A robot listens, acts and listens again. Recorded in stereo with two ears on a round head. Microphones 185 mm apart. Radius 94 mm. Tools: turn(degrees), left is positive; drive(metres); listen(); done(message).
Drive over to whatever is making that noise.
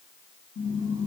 turn(degrees=60)
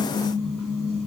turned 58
drive(metres=1.0)
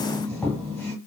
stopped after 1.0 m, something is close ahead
done("Arrived at the squeak, straight ahead.")